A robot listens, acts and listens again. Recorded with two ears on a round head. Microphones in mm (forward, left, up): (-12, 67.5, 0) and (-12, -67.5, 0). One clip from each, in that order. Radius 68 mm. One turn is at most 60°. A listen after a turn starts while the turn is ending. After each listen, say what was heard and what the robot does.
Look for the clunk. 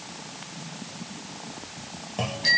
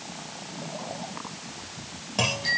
Turn 60° right.
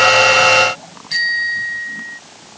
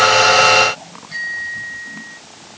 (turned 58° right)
Nothing new. It was at 30° right. Turn 30° right.
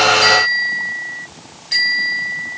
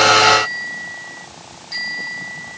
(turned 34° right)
I heard a clunk from this way, but can't make it out now.